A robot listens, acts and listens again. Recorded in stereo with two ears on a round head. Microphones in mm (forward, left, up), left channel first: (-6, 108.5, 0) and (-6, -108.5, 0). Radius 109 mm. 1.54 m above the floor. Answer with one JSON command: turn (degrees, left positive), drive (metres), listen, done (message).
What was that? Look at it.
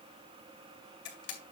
{"turn": 50}
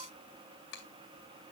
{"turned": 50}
{"turn": 70}
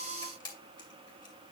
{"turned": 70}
{"turn": 20}
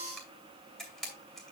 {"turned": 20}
{"done": "Facing the camera shutter, 2 to 4 m away."}